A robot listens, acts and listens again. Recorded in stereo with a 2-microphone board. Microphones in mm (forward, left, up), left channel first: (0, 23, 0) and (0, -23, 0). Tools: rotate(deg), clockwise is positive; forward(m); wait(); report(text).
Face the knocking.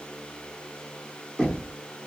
rotate(30)
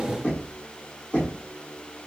rotate(-30)
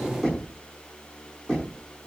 report("Found it: knocking, straight ahead, over 4 m away.")